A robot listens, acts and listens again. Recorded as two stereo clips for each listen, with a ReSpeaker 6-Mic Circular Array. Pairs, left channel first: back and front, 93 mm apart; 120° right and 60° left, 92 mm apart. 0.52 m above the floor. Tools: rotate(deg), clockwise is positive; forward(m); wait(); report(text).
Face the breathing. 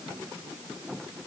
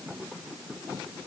wait()
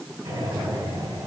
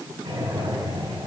rotate(-60)
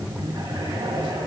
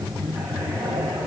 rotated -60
report("Facing the breathing, over 4 m away.")